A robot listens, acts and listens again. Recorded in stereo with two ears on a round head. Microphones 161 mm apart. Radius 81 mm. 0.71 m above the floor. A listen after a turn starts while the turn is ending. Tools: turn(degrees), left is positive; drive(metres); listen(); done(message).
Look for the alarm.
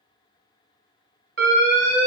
turn(degrees=-55)
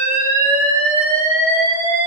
turn(degrees=-15)
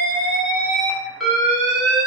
done("Found it: an alarm, straight ahead, 1 to 2 m away.")